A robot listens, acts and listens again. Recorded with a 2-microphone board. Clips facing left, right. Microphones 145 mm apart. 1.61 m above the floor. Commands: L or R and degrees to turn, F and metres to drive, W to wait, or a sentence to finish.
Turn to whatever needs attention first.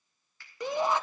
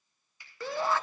L20
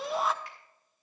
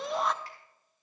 Facing the shout, under 1 m away.